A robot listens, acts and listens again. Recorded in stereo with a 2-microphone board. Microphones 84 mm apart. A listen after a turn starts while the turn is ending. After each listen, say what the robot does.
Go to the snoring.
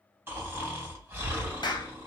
Turn 30° right.
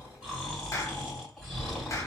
Drive 1.0 m forward.
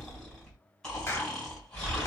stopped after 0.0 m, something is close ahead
Blocked. The snoring is further on, straight ahead.